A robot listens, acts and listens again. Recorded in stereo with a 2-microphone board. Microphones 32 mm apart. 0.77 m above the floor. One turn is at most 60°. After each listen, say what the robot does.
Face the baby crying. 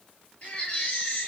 Turn 45° left.
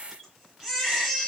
Found it: a baby crying, straight ahead.